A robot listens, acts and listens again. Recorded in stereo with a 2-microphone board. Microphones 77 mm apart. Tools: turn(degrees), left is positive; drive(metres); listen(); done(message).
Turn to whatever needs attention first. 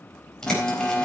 turn(degrees=20)
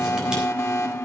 turn(degrees=135)
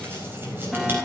done("Found it: an alarm, straight ahead, 2 to 4 m away.")